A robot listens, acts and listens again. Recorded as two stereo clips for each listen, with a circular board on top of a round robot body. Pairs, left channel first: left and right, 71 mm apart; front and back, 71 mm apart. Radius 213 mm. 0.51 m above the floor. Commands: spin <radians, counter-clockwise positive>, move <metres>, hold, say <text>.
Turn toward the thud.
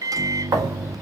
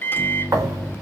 spin -2.44
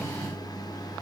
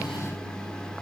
say Facing where the thud came from. I can't hear it now.